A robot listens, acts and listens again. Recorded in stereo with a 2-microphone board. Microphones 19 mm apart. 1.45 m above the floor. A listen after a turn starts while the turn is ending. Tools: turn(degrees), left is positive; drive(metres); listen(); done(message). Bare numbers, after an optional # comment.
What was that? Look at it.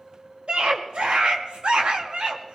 turn(-90)
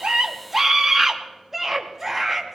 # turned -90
# So it is at 15° right.
turn(-15)
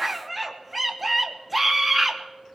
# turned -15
done("Facing the scream.")